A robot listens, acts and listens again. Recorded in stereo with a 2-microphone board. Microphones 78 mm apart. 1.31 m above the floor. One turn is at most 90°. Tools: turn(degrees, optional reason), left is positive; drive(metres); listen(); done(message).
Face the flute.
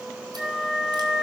turn(degrees=-30)
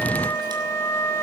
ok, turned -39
turn(degrees=35, reason="So it is at 35° left.")
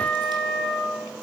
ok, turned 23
turn(degrees=10, reason="The flute is now 10° left.")
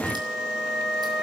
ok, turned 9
done("Found it: a flute, straight ahead.")